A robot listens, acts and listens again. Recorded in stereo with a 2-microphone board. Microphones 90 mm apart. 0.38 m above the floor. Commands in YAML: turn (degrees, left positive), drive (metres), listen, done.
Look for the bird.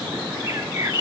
turn: -30
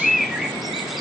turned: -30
done: "Found it: a bird, straight ahead, 1 to 2 m away."